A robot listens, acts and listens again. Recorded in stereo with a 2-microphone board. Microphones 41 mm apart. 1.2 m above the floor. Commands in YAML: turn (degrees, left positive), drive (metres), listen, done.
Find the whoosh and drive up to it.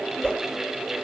turn: 25
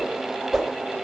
drive: 1.0
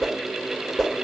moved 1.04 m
drive: 1.0
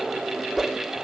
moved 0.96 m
drive: 1.0
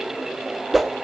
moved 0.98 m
drive: 1.0
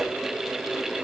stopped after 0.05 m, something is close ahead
listen: true
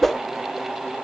done: "Arrived at the whoosh, straight ahead."